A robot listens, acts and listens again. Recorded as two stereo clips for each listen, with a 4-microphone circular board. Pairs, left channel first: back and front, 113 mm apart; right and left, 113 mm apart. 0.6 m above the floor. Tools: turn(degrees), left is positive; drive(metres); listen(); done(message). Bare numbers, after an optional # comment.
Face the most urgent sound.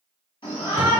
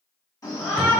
# The shout: 145° right.
turn(-145)
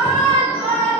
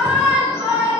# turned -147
done("Facing the shout, 1 to 2 m away.")